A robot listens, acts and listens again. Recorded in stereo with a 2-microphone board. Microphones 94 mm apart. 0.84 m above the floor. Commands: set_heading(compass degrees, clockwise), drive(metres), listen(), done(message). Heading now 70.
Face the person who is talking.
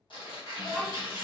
set_heading(40)
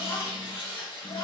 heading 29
set_heading(254)
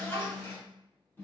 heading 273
set_heading(253)
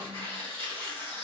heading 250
listen()
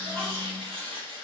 listen()
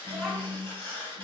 done("Facing the child speaking.")